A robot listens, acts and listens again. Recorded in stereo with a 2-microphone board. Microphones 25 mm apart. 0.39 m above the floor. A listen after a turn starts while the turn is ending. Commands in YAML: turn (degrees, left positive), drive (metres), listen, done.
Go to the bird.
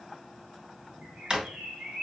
turn: -90
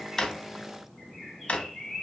turn: 15
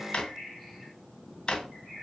drive: 1.0
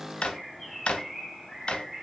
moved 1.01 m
turn: -10
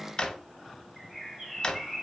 drive: 1.0
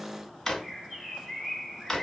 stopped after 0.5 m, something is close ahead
done: "Arrived at the bird, straight ahead."